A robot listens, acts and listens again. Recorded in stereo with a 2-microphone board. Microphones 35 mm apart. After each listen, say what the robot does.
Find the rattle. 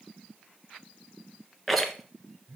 Turn 30° left.
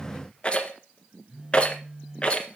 Turn 150° left.
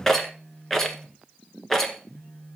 Turn 10° left.
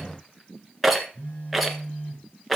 Found it: a rattle, straight ahead, 1 to 2 m away.